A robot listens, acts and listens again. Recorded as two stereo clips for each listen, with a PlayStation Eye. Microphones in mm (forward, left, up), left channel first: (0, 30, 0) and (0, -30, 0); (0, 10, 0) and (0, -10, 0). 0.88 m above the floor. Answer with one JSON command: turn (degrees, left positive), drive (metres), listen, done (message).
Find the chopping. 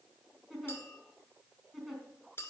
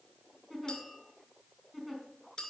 {"listen": true}
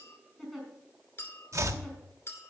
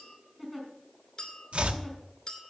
{"turn": -60}
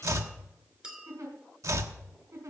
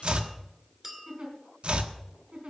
{"turn": -60}
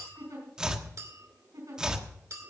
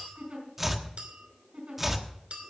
{"turn": -10}
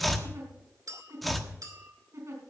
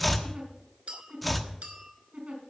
{"done": "Facing the chopping, 1 to 2 m away."}